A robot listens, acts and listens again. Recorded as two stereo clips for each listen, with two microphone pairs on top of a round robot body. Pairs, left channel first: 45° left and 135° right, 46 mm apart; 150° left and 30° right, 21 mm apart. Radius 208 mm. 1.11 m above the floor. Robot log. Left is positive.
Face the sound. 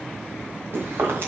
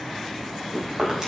note: The chewing: 100° right.
cmd yaw -100
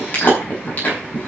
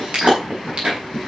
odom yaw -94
end: Facing the chewing.